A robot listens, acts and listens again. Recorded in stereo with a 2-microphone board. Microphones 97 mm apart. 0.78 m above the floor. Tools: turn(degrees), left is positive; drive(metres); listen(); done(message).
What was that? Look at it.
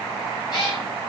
turn(degrees=45)
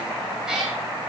turn(degrees=-10)
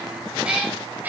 turn(degrees=-20)
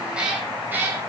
turn(degrees=-20)
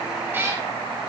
turn(degrees=-25)
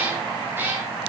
turn(degrees=-25)
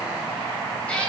turn(degrees=10)
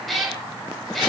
done("Facing the cat meowing.")